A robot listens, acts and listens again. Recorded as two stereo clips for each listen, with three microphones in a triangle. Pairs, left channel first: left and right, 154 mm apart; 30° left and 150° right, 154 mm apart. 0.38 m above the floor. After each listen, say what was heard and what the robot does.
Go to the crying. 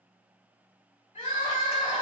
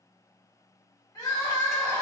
The crying: 90° left. Turn 90° left.
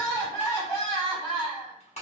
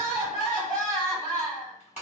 The crying is now 25° left. Turn 25° left.
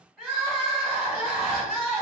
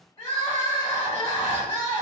Drive 1.0 m forward.
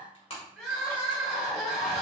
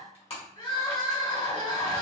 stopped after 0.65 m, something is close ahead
Arrived at the crying, straight ahead.